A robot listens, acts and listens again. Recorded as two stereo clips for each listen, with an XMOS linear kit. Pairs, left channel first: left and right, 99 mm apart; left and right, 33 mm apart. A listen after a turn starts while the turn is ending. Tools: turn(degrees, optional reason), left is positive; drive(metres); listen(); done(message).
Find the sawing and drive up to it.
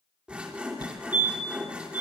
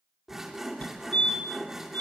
turn(degrees=-30)
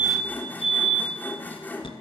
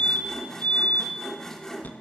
turn(degrees=20, reason="So it is at 20° left.")
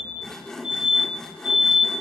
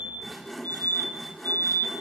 drive(metres=1.0)
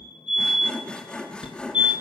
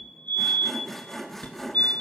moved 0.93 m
turn(degrees=10, reason="The sawing is now 10° left.")
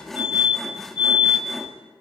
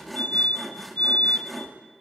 drive(metres=1.0)
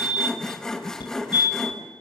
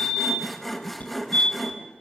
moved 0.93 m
drive(metres=1.0)
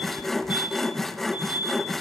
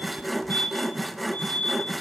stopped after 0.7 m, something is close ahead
done("I am next to the sawing.")